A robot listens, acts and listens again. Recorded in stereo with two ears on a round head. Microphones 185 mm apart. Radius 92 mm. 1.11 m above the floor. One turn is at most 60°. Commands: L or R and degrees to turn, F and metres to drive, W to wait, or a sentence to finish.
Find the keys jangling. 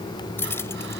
L30
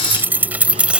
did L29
Found it: keys jangling, straight ahead.